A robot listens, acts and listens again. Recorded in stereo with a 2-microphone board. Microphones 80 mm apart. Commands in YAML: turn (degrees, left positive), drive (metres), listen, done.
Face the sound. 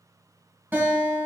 turn: -25
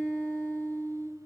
turn: -125
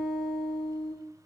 turn: 10
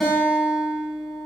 done: "Found it: a guitar, straight ahead."